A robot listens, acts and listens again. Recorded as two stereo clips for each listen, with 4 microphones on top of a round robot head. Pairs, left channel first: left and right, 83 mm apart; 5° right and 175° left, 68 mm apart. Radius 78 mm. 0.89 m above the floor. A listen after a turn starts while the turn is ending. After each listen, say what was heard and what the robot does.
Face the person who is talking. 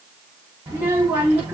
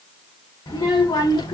The child speaking: 20° right. Turn 20° right.
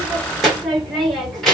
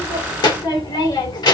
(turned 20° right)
Found it: a child speaking, straight ahead, 2 to 4 m away.